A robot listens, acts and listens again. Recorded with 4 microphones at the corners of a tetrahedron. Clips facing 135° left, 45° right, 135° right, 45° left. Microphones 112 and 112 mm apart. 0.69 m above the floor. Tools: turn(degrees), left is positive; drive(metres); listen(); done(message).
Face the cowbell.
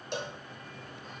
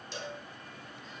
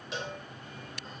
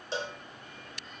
turn(degrees=105)
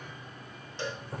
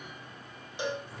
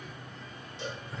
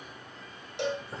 turn(degrees=30)
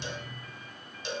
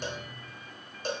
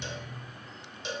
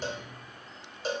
done("Facing the cowbell, 2 to 4 m away.")